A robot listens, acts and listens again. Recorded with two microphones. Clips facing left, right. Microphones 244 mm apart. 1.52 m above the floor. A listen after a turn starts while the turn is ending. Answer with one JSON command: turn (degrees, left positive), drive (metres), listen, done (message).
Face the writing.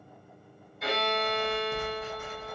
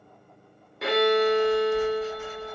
{"turn": 60}
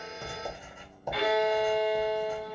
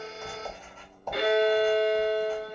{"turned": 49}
{"turn": 10}
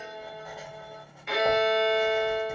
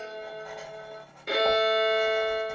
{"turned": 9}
{"done": "Found it: writing, straight ahead."}